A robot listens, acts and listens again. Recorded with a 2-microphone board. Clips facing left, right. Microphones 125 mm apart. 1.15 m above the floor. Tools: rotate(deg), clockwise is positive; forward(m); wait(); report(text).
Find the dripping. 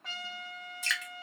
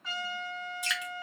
rotate(30)
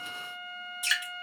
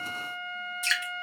rotate(-15)
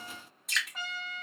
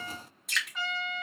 report("Found it: dripping, straight ahead.")